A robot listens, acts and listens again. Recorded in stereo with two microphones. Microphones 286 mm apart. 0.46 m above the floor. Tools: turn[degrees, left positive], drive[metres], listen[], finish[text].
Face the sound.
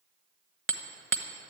Thought: The hammering: about 45° right or 135° right.
Action: turn[-45]
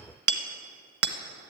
Thought: So it is at 85° right.
Action: turn[-85]
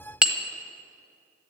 Action: finish[Found it: hammering, straight ahead, 1 to 2 m away.]